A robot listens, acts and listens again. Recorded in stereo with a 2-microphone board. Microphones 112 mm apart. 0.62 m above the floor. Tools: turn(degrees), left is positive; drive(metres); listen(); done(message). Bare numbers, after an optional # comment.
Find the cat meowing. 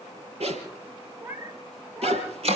# The cat meowing: about 15° right or 165° right.
turn(-15)
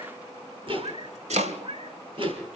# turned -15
# So it is at 120° right.
turn(-120)
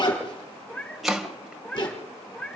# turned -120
# The cat meowing is now 10° left.
turn(10)
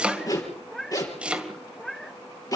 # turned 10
done("Facing the cat meowing.")